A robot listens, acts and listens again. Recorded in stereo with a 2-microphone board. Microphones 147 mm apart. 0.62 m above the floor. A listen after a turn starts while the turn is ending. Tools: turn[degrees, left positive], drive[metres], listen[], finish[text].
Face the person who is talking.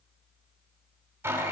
Action: listen[]
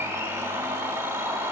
Action: listen[]
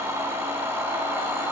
Action: finish[I can't make out anyone speaking to turn to.]